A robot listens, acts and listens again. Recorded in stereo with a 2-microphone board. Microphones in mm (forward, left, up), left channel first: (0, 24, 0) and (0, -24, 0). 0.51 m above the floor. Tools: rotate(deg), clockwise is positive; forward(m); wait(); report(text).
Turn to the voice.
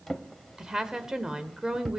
rotate(30)
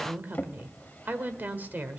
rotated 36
rotate(130)
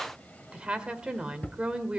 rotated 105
rotate(25)
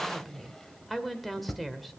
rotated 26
report("Facing the woman speaking.")